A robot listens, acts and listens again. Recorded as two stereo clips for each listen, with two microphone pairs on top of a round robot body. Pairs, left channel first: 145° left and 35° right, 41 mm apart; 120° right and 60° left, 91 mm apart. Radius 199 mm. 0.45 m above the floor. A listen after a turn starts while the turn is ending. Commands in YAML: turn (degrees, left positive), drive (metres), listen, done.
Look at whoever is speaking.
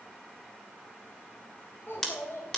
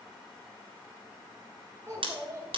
turn: 120
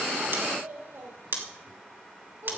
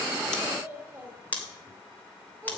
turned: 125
done: "Found it: a child speaking, straight ahead, 2 to 4 m away."